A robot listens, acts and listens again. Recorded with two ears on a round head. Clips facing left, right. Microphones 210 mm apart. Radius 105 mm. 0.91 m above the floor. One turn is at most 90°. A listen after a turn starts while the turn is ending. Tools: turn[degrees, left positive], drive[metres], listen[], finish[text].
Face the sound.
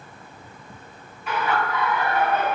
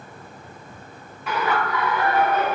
Thought: The laughter: about 55° right or 125° right.
Action: turn[-55]
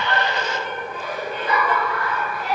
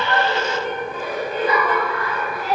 Thought: So it is at 65° right.
Action: turn[-65]
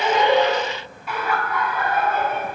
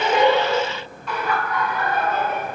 Action: finish[Found it: laughter, straight ahead, 2 to 4 m away.]